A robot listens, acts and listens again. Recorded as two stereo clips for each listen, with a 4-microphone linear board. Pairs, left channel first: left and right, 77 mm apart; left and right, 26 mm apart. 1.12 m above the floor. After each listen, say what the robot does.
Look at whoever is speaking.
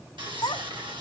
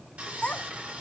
Turn 65° left.
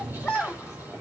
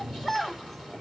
Found it: a child speaking, straight ahead, 2 to 4 m away.